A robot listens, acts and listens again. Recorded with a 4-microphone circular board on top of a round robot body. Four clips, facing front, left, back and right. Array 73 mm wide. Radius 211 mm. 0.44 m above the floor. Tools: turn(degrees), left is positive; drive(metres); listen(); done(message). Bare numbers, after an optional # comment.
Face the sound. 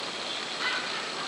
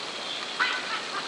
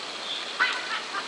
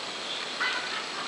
# The laughter: 130° left.
turn(130)
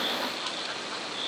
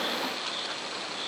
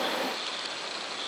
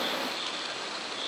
listen()
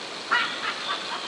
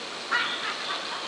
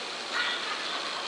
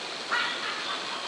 done("Facing the laughter, over 4 m away.")